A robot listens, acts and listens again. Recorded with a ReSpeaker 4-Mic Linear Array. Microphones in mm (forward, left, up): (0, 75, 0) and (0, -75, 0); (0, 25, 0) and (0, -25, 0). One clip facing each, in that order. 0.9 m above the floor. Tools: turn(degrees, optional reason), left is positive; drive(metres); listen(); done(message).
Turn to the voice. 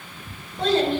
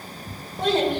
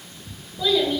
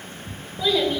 turn(degrees=-15, reason="The child speaking: about 15° right or 165° right.")
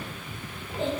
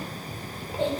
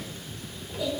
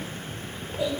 turn(degrees=-150, reason="So it is at 150° right.")
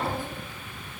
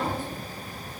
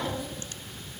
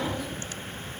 listen()
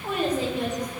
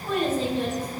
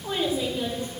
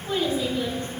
turn(degrees=15, reason="The child speaking is now 15° left.")
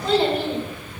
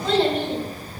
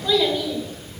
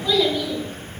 done("Found it: a child speaking, straight ahead.")